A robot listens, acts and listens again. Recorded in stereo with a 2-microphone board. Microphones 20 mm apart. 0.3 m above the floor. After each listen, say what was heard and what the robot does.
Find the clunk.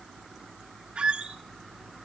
Keep listening.
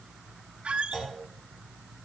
The clunk: about 55° left or 125° left. Turn 55° left.
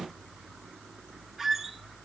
Keep listening.
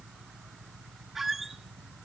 I heard a clunk, but can't make it out now. It was about straight ahead or 70° left.